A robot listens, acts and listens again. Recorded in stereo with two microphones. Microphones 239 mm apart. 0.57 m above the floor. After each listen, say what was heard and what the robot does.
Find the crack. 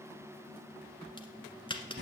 The crack: about 20° left or 160° left. Turn 20° left.
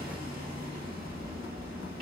Keep listening.
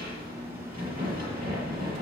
I heard a crack, but can't make it out now. It was about straight ahead or 140° left.